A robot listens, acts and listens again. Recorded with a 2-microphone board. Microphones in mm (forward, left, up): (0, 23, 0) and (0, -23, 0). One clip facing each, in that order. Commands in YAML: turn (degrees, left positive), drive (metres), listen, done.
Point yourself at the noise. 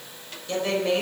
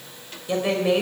turn: -30
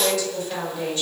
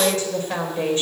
turn: -145
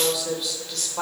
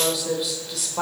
done: "Found it: a woman speaking, straight ahead."